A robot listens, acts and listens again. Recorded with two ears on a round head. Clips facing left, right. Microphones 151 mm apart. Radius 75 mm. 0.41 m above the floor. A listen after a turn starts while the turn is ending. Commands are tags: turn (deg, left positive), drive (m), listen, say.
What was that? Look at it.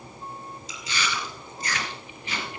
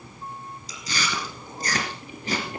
<turn deg="-35"/>
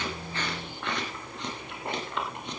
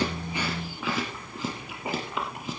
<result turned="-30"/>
<say>Facing the chewing.</say>